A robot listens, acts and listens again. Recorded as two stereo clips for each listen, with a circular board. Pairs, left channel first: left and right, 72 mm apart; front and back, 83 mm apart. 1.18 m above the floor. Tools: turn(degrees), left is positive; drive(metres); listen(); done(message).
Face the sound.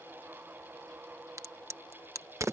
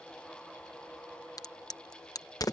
turn(degrees=-45)
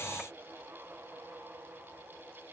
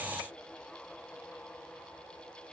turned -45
done("Facing where the crack came from. I can't hear it now.")